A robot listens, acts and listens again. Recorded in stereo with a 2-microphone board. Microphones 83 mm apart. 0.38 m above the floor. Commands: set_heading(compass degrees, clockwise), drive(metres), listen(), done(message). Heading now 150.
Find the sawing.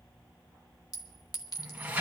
listen()
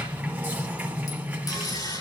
set_heading(95)
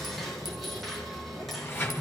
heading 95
done("Found it: sawing, straight ahead, over 4 m away.")